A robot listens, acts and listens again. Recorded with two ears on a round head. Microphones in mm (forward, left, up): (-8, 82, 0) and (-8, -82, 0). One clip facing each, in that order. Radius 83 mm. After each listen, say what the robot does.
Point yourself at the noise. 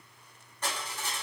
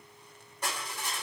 Turn 30° right.
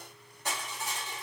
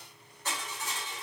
Turn 20° left.
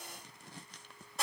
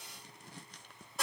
Found it: crushing, straight ahead, 1 to 2 m away.